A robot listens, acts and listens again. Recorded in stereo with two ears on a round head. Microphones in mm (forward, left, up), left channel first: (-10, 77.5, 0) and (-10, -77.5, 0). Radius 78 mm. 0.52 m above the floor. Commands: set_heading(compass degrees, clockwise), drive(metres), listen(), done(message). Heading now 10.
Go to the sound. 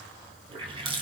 set_heading(40)
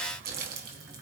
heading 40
set_heading(160)
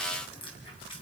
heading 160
set_heading(130)
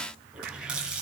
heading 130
drive(1.0)
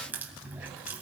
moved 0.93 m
set_heading(140)
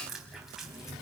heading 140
drive(1.0)
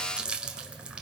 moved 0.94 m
drive(1.0)
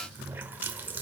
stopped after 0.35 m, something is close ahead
set_heading(155)
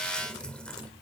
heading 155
done("Arrived at the running tap, straight ahead.")